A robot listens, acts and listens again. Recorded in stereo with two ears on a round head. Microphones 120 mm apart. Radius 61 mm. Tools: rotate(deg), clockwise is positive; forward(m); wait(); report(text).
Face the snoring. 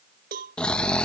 rotate(-30)
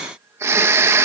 rotate(20)
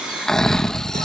report("Facing the snoring.")